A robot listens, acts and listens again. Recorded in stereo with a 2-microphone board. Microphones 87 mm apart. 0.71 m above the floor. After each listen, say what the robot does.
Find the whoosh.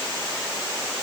Keep listening.
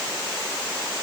Keep listening.
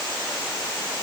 I can't make out a whoosh to turn to.